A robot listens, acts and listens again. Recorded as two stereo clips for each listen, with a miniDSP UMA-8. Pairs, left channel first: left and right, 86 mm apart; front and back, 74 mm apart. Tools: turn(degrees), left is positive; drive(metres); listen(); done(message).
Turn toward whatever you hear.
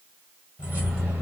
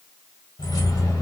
turn(degrees=-25)
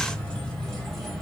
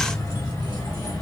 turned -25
done("Facing the keys jangling.")